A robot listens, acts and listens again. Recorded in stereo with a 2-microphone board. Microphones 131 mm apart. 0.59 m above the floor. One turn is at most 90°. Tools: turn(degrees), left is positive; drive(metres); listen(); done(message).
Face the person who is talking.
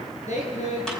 turn(degrees=65)
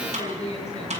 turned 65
turn(degrees=55)
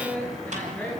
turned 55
turn(degrees=15)
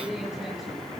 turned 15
done("Facing the woman speaking, over 4 m away.")